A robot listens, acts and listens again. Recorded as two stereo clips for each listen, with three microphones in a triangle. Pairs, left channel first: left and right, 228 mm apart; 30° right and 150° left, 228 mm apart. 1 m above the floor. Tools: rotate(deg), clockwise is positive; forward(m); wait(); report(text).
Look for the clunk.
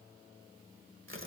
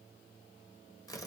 wait()
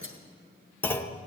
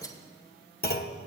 rotate(-10)
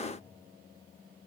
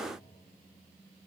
report("Facing where the clunk came from. I can't hear it now.")